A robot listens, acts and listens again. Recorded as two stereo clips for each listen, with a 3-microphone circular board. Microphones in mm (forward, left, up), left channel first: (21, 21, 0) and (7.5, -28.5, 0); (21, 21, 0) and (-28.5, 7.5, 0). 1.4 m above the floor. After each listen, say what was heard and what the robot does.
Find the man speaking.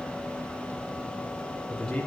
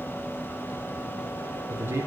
The man speaking: 150° left. Turn 150° left.
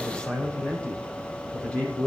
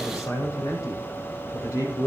The man speaking is now 10° left. Turn 10° left.
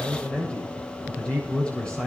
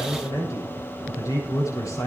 Facing the man speaking.